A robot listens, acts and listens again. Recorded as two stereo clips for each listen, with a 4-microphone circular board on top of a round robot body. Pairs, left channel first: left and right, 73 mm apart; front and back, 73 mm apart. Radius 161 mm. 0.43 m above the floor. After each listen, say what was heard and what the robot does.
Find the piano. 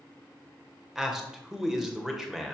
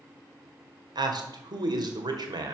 Keep listening.
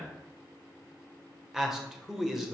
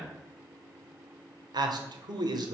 Keep listening.
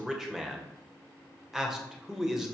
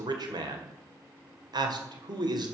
I can't make out a piano, only a man speaking.